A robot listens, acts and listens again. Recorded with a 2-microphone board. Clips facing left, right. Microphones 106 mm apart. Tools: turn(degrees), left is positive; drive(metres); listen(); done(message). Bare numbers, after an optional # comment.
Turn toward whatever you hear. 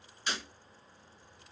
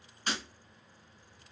# The breaking glass: about 45° right or 135° right.
turn(-45)
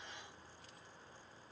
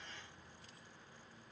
listen()
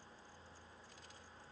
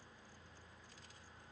done("I heard breaking glass, but can't make it out now. It was about straight ahead or 90° right.")